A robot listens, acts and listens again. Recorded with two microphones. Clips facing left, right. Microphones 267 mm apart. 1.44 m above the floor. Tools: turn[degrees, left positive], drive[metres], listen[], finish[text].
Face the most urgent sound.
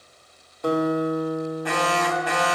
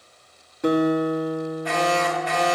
Thought: The alarm: about 55° left or 125° left.
Action: turn[55]
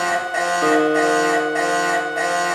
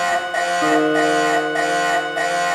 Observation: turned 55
Action: finish[Facing the alarm.]